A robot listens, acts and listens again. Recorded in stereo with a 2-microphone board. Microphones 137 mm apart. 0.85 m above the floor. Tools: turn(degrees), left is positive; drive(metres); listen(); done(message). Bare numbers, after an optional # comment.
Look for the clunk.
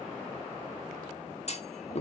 # The clunk: about 50° left or 130° left.
turn(50)
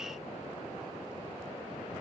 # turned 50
listen()
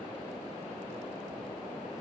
done("I heard a clunk, but can't make it out now. It was about straight ahead or 80° left.")